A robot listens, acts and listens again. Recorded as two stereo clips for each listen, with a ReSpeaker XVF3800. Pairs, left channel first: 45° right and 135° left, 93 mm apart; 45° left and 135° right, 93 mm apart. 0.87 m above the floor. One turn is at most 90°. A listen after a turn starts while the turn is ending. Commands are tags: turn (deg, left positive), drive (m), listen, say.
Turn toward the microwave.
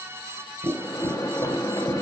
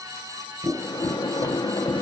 <say>Facing the microwave.</say>